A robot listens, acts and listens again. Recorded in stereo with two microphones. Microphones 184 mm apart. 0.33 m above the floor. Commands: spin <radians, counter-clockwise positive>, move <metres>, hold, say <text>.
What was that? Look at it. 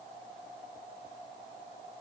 hold
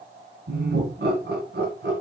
spin -1.22
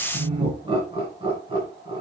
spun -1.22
spin -0.52
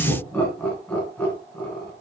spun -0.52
spin 0.17
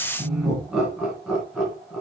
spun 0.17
say Facing the laughter, 2 to 4 m away.